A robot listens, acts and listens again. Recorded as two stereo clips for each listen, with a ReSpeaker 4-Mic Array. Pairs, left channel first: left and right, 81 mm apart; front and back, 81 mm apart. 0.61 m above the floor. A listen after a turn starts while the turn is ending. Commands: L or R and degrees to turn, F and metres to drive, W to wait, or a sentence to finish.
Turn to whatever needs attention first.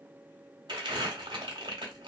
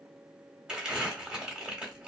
W
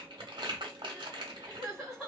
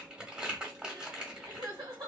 L175
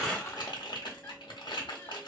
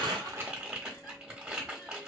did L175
W
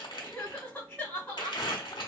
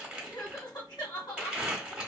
L20
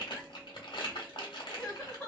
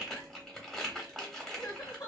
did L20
Facing the crying.